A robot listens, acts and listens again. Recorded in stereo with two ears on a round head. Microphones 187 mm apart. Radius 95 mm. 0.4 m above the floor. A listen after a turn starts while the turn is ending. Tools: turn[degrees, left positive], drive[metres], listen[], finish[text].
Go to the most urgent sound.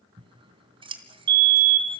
Thought: The fire alarm: about 55° right or 125° right.
Action: turn[-55]
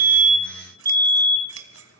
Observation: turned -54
Thought: So it is at 20° right.
Action: turn[-20]
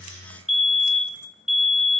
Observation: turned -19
Action: drive[1.0]
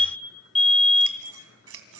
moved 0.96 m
Action: drive[1.0]
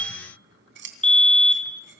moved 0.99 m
Thought: The fire alarm is now 10° left.
Action: turn[10]
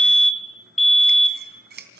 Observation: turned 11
Action: drive[1.0]
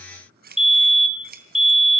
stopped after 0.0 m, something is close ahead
Action: finish[I am next to the fire alarm.]